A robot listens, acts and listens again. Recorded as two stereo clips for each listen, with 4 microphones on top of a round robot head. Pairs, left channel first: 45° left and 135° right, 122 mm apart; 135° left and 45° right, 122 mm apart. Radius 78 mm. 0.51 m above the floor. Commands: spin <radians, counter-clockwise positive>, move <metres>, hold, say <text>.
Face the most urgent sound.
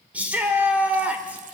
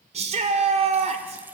spin -1.05
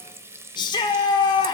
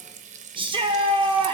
say Facing the shout.